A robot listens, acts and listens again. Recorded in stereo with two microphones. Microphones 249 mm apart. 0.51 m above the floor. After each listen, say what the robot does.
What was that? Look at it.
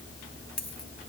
Turn 90° left.
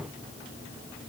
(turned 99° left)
Turn 10° right.
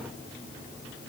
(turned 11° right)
Facing where the dropped coin came from. I can't hear it now.